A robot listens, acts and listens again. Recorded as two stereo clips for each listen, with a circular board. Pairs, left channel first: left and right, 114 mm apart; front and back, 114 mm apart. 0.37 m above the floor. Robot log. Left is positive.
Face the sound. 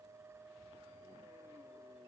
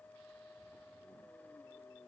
cmd idle
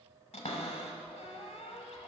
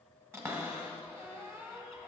note: The cupboard door: 115° left.
cmd yaw +115
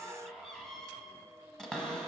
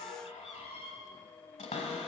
end: Found it: a cupboard door, straight ahead, under 1 m away.